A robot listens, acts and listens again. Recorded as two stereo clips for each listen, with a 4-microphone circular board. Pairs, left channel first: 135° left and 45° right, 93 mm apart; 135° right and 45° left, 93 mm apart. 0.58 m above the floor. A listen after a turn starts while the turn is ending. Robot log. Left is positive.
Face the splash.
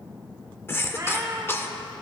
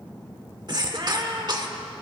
cmd idle
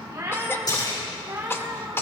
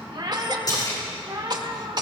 note: The splash: straight behind.
cmd yaw +180
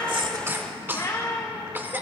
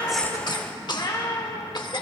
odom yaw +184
end: Facing where the splash came from. I can't hear it now.